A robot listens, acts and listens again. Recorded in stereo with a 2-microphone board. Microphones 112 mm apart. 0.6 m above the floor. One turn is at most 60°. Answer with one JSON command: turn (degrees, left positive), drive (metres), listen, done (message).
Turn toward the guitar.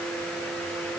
{"listen": true}
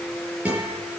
{"turn": -30}
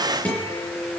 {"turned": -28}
{"turn": 15}
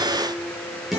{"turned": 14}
{"done": "Facing the guitar, over 4 m away."}